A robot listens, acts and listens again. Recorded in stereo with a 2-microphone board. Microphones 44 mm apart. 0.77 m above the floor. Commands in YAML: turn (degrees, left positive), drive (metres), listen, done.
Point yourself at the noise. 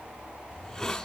turn: 30
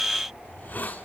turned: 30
turn: 135
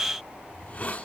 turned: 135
turn: 40
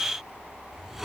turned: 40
done: "Facing the hiss."